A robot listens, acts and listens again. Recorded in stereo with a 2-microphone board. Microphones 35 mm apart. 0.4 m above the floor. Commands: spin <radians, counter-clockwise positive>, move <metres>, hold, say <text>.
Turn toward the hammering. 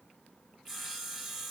hold
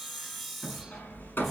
spin 1.57
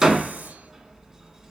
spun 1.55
spin -0.17
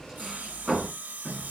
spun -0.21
say Facing the hammering.